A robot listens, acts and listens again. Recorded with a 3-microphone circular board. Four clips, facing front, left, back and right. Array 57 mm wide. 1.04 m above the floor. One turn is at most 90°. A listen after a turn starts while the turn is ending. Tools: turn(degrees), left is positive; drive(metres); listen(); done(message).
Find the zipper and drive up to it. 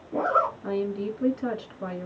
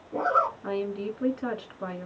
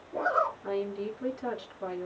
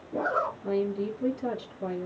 turn(degrees=20)
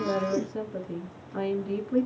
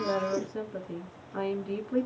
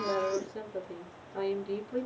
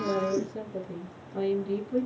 drive(metres=1.0)
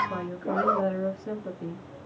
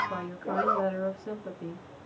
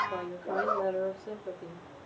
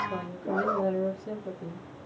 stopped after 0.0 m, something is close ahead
done("Something is in my way. I am facing the zipper but have not reached it.")